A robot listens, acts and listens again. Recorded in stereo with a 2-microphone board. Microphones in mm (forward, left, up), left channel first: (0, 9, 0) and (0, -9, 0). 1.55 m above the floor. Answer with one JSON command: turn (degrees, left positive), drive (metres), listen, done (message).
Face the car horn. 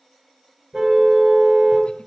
{"turn": -35}
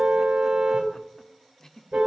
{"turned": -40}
{"turn": -105}
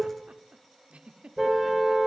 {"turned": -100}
{"done": "Found it: a car horn, straight ahead."}